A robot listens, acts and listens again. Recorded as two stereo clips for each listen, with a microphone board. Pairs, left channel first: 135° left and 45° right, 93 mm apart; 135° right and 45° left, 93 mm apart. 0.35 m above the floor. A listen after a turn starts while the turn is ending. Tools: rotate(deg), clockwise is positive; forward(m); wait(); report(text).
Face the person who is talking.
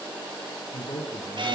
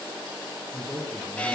rotate(-140)
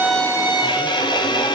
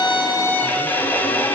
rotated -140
wait()
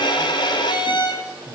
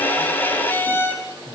rotate(15)
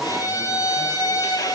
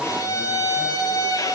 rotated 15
wait()
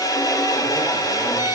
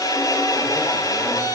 wait()
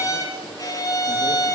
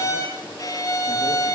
report("Facing where the man speaking came from. I can't hear it now.")